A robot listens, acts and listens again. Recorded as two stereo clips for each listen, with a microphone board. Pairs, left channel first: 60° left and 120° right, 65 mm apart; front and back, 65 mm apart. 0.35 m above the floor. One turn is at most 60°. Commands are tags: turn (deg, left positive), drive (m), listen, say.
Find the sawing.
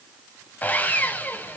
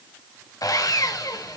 <say>Facing the sawing.</say>